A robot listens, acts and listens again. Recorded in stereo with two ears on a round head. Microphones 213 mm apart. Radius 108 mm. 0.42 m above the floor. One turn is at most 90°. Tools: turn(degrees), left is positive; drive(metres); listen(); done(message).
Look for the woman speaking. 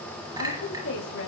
turn(degrees=70)
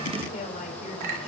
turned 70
turn(degrees=35)
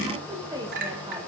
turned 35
turn(degrees=-15)
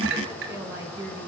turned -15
turn(degrees=-10)
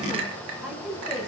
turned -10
done("Facing the woman speaking.")